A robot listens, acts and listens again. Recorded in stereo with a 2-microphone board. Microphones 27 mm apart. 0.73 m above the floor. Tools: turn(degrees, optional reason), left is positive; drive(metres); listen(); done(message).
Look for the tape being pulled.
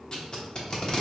turn(degrees=35, reason="The tape being pulled: about 35° left or 145° left.")
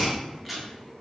done("Found it: tape being pulled, straight ahead.")